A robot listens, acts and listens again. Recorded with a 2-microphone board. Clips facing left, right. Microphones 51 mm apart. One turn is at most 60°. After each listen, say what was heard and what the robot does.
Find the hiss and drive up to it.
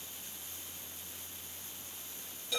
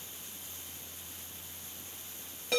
Keep listening.
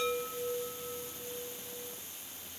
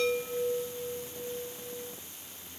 Keep listening.
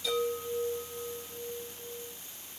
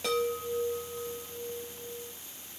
I can't make out a hiss, only a chime.